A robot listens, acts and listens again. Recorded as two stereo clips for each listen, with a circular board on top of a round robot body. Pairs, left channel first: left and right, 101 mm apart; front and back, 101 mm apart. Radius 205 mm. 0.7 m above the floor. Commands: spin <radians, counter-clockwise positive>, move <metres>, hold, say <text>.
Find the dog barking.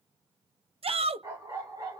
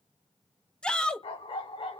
spin -0.61
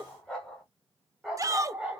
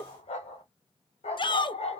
spin -0.17
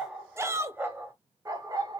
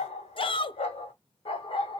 spin -0.70
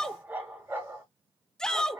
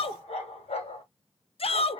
spin -0.44
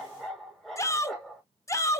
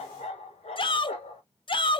say Facing the dog barking, 1 to 2 m away.